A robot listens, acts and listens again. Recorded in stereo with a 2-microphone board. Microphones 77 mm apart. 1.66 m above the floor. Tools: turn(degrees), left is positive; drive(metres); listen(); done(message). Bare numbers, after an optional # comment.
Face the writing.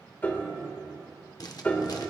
# The writing: about 55° left or 125° left.
turn(55)
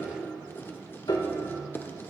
# So it is at 35° left.
turn(35)
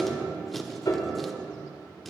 done("Found it: writing, straight ahead.")